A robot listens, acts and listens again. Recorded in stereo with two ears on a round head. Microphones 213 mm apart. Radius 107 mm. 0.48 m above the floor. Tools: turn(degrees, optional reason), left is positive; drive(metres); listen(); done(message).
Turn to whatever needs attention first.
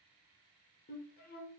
listen()
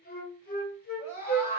turn(degrees=40, reason="The scream: about 40° left or 140° left.")
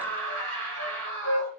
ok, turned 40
turn(degrees=10, reason="So it is at 10° left.")
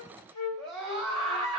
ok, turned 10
done("Found it: a scream, straight ahead.")